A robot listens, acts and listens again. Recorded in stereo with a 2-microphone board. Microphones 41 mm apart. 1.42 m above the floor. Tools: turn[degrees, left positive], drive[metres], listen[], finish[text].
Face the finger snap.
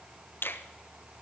Thought: The finger snap: about 75° left or 105° left.
Action: turn[75]
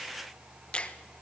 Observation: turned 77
Thought: So it is at 30° left.
Action: turn[30]
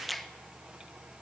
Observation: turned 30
Action: finish[Found it: a finger snap, straight ahead, 1 to 2 m away.]